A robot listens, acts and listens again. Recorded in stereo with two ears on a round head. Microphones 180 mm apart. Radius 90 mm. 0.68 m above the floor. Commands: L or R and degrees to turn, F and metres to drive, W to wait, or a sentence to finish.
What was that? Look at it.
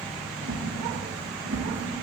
R65
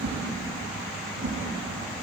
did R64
R50
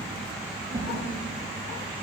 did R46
Facing the whoosh, 2 to 4 m away.